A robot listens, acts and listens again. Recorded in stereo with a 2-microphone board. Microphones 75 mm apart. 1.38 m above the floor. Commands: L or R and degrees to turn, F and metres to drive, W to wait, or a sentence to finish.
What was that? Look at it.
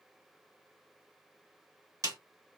R50
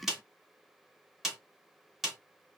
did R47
Found it: a snare drum, straight ahead, 1 to 2 m away.